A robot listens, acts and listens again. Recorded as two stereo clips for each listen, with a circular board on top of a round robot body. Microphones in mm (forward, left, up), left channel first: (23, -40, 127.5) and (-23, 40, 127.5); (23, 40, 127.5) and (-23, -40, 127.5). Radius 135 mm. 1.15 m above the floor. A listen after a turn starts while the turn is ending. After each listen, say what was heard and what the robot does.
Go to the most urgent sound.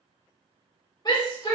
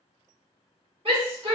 The shout: 105° right. Turn 105° right.
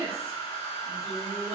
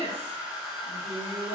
Keep listening.
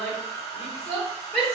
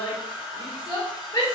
The shout is now 20° left. Turn 20° left.
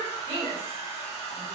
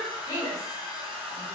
Drive 1.0 m forward.
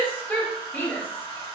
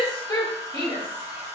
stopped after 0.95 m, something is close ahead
The shout is now 10° left. Turn 10° left.
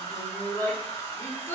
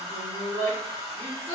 I am next to the shout.